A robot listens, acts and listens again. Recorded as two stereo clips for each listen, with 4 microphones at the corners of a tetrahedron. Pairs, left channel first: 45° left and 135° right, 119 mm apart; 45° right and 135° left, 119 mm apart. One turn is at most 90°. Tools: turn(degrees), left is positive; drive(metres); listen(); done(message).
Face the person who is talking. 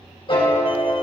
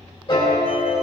listen()
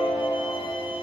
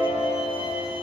listen()
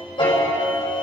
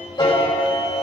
done("I can't make out anyone speaking, only a piano.")